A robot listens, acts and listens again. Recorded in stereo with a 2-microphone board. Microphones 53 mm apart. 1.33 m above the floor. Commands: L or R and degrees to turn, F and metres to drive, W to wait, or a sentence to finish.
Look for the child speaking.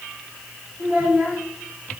R40
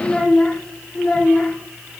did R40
L20
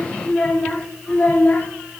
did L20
L30
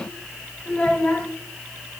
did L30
L20
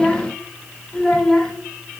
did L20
Found it: a child speaking, straight ahead.